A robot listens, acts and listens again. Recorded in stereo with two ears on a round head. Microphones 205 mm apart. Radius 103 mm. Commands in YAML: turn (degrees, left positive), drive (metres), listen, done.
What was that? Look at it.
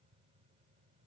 listen: true
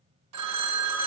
turn: -90
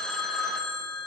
done: "Facing the phone ringing, 1 to 2 m away."